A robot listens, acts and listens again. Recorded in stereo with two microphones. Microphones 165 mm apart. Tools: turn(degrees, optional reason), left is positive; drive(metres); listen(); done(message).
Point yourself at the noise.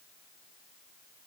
listen()
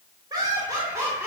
turn(degrees=-30)
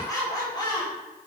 turn(degrees=30, reason="So it is at 30° left.")
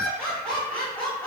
turn(degrees=10, reason="The laughter is now 10° left.")
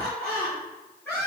turn(degrees=15, reason="The laughter is now 15° left.")
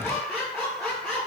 done("Facing the laughter.")